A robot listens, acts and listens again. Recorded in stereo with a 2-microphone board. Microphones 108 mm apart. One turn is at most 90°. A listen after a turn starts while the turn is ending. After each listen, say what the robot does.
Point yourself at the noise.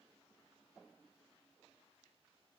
Keep listening.
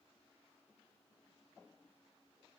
Keep listening.
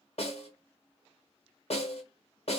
Turn 65° left.
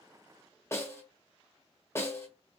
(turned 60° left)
Turn 25° left.
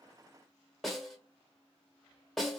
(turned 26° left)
Facing the snare drum.